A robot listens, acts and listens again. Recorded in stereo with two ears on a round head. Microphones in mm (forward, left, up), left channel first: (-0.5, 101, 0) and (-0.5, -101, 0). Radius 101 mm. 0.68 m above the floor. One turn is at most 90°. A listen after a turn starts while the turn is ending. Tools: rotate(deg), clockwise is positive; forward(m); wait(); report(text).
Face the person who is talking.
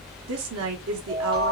rotate(65)
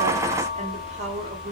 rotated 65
rotate(30)
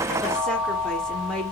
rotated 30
report("Found it: a woman speaking, straight ahead, 1 to 2 m away.")